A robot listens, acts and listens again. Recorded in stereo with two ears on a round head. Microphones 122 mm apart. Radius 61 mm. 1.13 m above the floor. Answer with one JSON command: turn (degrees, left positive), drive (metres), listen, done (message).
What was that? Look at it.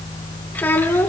{"turn": 15}
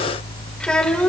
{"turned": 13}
{"turn": 30}
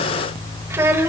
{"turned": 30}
{"turn": -20}
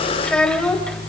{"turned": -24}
{"turn": 10}
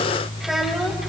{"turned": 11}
{"listen": true}
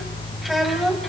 {"done": "Found it: a child speaking, straight ahead, over 4 m away."}